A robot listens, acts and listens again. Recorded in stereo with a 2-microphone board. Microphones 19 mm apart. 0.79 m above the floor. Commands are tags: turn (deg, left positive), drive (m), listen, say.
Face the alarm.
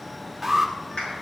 <turn deg="30"/>
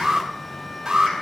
<turn deg="-35"/>
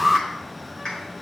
<turn deg="10"/>
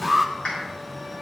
<say>Facing the alarm, 2 to 4 m away.</say>